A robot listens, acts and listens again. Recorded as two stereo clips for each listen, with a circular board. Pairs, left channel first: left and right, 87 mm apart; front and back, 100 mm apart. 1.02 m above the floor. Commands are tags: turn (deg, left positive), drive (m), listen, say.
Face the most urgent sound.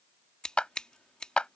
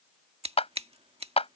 <listen/>
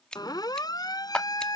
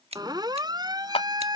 <turn deg="130"/>
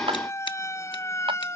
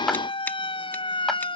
<turn deg="35"/>
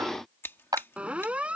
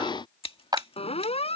<turn deg="-15"/>
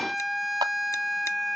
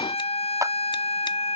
<say>Found it: a siren, straight ahead.</say>